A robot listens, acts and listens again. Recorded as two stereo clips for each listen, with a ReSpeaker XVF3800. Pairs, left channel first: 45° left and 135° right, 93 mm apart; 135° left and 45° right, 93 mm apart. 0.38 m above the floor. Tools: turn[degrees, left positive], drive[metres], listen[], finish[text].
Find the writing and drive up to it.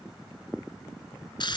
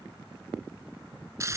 Action: listen[]
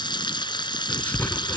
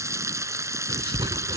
Thought: The writing: 25° right.
Action: turn[-25]
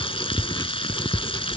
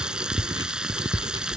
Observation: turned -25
Action: drive[1.0]
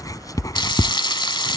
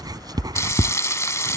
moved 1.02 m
Action: drive[1.0]
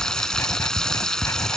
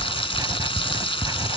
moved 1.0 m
Thought: The writing is now 10° right.
Action: turn[-10]
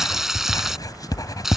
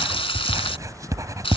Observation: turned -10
Action: drive[1.0]
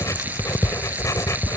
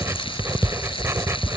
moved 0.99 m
Action: drive[1.0]
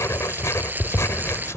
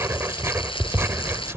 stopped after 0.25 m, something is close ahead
Action: finish[Arrived at the writing, straight ahead.]